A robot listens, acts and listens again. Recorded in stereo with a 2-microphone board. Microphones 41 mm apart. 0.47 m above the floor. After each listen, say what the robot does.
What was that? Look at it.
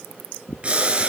Turn 30° right.
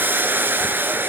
Turn 120° right.
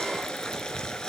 Turn 20° left.
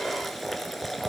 Facing the boiling, 2 to 4 m away.